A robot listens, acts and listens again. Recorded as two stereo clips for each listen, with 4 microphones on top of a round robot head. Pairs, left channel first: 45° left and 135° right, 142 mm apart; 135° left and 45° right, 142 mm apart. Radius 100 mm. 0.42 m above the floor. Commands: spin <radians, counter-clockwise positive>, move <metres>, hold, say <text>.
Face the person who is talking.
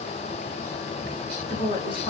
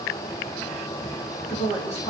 spin 1.66
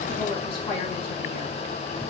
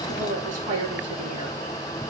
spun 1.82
spin -0.17
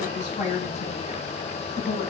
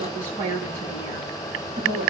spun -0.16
say Found it: a woman speaking, straight ahead.